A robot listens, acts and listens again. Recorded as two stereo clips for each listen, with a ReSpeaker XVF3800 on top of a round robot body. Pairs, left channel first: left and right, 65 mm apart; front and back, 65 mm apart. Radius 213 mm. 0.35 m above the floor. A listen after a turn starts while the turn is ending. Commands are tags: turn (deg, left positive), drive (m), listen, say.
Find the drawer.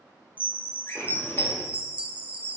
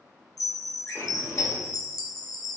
<turn deg="40"/>
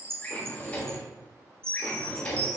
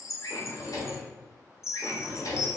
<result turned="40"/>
<turn deg="20"/>
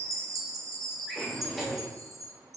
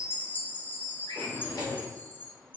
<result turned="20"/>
<say>Facing the drawer.</say>